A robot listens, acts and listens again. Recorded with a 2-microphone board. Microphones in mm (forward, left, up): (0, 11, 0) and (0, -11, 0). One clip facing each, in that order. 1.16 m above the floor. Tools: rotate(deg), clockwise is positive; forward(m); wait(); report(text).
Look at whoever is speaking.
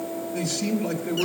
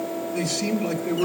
rotate(-30)
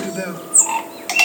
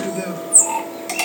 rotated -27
rotate(-140)
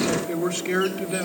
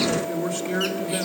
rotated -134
rotate(-10)
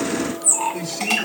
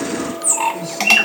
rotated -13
wait()
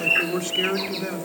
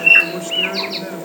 report("Facing the man speaking.")